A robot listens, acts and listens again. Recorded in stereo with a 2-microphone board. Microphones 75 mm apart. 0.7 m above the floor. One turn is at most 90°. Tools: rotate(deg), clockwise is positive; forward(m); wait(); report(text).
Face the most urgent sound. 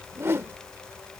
wait()
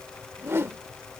wait()
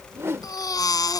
rotate(-55)
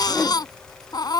rotate(-65)
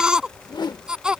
rotate(10)
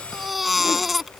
report("Found it: a baby crying, straight ahead.")